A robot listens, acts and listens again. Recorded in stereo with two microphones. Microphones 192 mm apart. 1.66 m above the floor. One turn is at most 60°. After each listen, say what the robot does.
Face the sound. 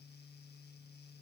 Keep listening.
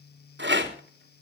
Turn 60° right.
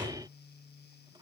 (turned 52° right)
Keep listening.
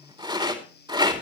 Turn 25° right.
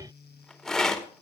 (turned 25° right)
Facing the rattle.